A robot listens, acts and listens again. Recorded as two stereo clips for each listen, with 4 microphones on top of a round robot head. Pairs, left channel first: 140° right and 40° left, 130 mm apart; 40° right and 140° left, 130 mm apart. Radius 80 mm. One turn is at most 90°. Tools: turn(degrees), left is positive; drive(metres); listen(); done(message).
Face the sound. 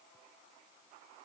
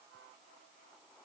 listen()
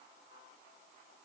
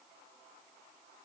listen()
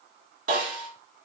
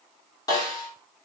turn(degrees=20)
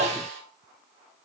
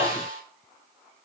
done("Facing the snare drum, 2 to 4 m away.")